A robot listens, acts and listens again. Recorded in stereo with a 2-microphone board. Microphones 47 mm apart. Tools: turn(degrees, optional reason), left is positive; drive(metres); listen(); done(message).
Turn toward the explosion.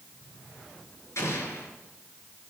turn(degrees=90)
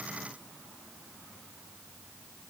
done("I heard an explosion from this way, but can't make it out now.")